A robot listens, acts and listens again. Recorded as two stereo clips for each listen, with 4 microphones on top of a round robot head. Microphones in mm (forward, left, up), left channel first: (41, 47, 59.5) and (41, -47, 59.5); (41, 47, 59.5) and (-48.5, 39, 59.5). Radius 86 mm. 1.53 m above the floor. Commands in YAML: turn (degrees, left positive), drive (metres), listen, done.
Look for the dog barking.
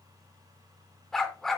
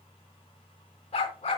done: "Facing the dog barking."